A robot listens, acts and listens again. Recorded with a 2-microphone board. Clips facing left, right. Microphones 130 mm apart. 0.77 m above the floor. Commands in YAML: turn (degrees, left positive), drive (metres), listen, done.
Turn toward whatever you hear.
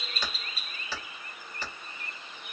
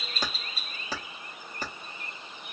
turn: -45
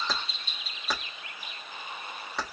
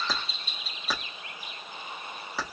done: "Found it: keys jangling, straight ahead, under 1 m away."